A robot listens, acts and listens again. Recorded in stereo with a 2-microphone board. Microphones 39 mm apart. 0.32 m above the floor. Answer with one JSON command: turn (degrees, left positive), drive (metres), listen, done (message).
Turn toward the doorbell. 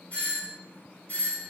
{"turn": 45}
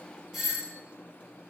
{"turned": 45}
{"done": "Found it: a doorbell, straight ahead, 2 to 4 m away."}